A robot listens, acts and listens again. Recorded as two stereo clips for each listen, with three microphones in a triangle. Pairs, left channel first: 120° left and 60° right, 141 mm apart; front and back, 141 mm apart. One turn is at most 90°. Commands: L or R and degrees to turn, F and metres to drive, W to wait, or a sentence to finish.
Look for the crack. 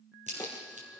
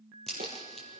R85
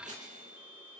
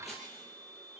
I heard a crack from this way, but can't make it out now.